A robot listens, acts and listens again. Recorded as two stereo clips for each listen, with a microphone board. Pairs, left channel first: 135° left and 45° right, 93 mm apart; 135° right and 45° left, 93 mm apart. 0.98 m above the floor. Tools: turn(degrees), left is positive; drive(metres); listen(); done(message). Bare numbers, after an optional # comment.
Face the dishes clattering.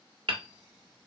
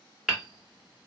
listen()
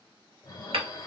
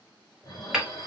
# The dishes clattering: 175° left.
turn(175)
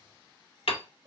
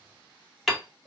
listen()
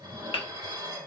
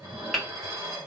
# The dishes clattering is now 10° right.
turn(-10)
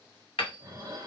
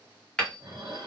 done("Found it: dishes clattering, straight ahead.")